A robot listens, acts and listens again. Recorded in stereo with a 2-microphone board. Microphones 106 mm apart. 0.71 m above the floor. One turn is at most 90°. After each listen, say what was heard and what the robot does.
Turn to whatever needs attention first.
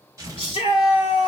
The shout: about 55° left or 125° left. Turn 55° left.
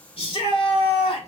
So it is at 65° left. Turn 65° left.
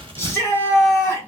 The shout is now 25° left. Turn 25° left.
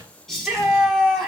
Found it: a shout, straight ahead, 1 to 2 m away.